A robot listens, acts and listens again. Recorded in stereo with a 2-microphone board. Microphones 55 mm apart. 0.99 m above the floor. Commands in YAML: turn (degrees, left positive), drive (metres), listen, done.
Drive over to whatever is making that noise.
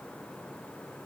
listen: true
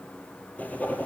turn: 25
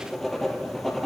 drive: 1.0
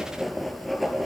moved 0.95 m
drive: 1.0
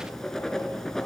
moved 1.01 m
turn: 10
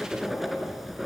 drive: 1.0
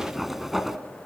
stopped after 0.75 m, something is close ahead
done: "Arrived at the writing, straight ahead."